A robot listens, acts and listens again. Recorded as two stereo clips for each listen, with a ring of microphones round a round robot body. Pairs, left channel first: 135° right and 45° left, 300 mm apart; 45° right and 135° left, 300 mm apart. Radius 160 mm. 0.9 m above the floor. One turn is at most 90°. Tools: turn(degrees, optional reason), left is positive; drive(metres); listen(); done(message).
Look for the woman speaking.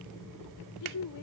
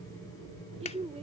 turn(degrees=-90, reason="The woman speaking: 155° right.")
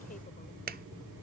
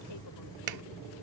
turn(degrees=-65, reason="Nothing new. It was at 65° right.")
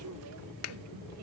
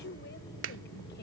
listen()
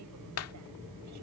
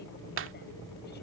done("I heard a woman speaking from this way, but can't make it out now.")